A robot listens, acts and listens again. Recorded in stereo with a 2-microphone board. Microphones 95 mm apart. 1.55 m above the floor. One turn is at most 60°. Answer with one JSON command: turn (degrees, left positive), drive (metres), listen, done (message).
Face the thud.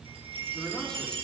{"listen": true}
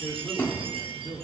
{"turn": 20}
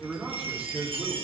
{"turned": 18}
{"listen": true}
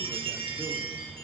{"done": "I heard a thud, but can't make it out now. It was about straight ahead or 140° left."}